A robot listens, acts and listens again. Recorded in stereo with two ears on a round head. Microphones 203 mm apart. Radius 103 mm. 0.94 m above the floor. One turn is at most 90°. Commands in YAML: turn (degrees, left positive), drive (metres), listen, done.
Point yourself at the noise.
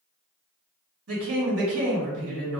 turn: -70
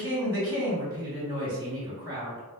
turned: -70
turn: -20
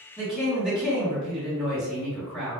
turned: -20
done: "Facing the woman speaking."